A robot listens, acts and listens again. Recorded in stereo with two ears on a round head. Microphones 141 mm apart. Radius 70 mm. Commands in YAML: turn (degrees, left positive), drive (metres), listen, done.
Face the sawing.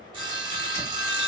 turn: -30
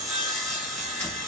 done: "Found it: sawing, straight ahead, under 1 m away."